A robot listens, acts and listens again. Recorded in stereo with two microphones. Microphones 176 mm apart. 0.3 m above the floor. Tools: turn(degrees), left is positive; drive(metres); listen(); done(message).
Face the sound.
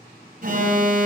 turn(degrees=-55)
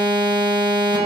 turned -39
turn(degrees=-30)
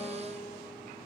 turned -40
turn(degrees=10)
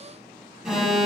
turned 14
done("Facing the alarm, 1 to 2 m away.")